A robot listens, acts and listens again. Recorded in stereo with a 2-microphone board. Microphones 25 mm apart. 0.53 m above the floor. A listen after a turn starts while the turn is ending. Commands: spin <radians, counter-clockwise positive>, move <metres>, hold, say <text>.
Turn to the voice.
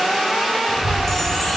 spin 1.13
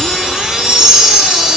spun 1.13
hold
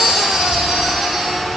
say Facing the child speaking.